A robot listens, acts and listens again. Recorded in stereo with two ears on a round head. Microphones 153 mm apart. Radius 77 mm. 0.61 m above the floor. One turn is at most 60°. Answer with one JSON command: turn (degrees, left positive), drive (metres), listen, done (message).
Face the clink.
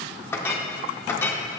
{"turn": 30}
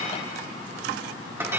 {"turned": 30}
{"turn": -15}
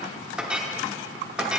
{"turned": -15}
{"done": "Found it: a clink, straight ahead."}